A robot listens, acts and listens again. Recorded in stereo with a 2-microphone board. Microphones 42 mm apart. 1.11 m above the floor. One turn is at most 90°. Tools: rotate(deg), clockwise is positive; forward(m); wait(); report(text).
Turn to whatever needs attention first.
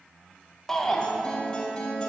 rotate(-30)
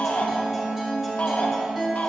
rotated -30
rotate(-90)
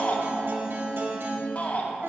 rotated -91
rotate(-50)
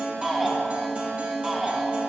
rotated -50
report("Found it: a shout, straight ahead.")